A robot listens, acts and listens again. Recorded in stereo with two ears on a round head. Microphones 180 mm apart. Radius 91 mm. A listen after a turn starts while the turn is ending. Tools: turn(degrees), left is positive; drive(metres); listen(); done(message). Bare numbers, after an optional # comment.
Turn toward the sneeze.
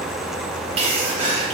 # The sneeze: about 30° right or 150° right.
turn(-30)
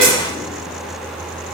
listen()
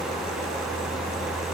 done("I heard a sneeze, but can't make it out now. It was about straight ahead or 120° right.")